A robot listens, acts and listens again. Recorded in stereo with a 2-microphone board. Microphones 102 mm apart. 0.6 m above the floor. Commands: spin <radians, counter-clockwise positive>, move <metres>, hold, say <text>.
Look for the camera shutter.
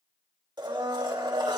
hold
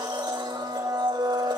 hold
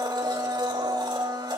say I can't make out a camera shutter to turn to.